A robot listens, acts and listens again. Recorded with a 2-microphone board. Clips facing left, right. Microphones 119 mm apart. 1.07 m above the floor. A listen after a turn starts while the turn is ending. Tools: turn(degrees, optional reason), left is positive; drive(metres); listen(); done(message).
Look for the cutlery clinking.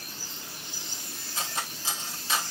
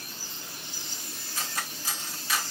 turn(degrees=25, reason="The cutlery clinking: about 25° left or 155° left.")
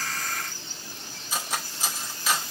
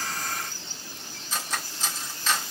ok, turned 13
turn(degrees=10, reason="So it is at 10° left.")
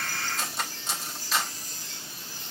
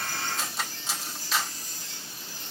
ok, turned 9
done("Facing the cutlery clinking.")